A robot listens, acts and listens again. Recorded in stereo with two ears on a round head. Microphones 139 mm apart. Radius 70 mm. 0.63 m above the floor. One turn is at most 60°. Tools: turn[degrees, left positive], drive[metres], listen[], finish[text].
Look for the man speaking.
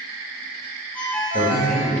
Thought: The man speaking: about 50° right or 130° right.
Action: turn[-50]
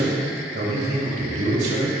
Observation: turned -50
Thought: So it is at 70° right.
Action: turn[-60]
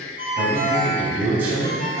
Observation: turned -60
Thought: The man speaking is now 10° right.
Action: turn[-10]
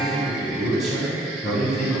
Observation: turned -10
Action: finish[Found it: a man speaking, straight ahead, 2 to 4 m away.]